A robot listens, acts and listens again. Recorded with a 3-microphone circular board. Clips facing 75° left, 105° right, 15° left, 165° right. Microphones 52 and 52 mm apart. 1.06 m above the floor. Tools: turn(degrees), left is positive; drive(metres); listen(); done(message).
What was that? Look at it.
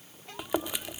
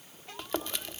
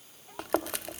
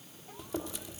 done("Facing the chewing.")